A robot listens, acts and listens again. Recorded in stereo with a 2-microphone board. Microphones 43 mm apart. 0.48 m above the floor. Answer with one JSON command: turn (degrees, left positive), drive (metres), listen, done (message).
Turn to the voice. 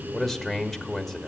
{"turn": 30}
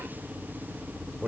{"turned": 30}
{"turn": -25}
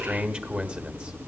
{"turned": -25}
{"turn": -30}
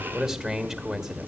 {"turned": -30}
{"turn": -20}
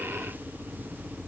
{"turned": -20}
{"listen": true}
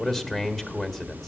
{"done": "Facing the man speaking."}